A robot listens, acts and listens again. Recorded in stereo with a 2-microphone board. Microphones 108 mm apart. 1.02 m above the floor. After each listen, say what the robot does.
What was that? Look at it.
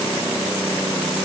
Keep listening.
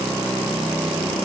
Keep listening.
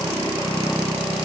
I can't make out anything.